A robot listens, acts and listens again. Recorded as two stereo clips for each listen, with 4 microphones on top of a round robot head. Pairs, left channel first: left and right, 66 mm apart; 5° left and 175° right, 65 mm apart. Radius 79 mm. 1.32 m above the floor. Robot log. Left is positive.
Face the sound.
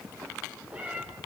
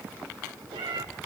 note: The cat meowing: 170° right.
cmd yaw -170
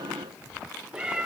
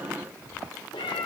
note: The cat meowing is now 20° right.
cmd yaw -20
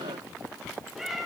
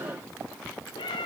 end: Found it: a cat meowing, straight ahead, 1 to 2 m away.